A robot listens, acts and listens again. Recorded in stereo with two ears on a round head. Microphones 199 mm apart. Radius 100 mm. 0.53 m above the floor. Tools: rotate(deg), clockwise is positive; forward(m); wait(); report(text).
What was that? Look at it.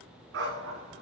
rotate(65)
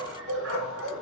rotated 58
rotate(60)
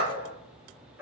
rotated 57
rotate(10)
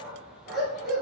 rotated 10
report("Found it: a dog barking, straight ahead.")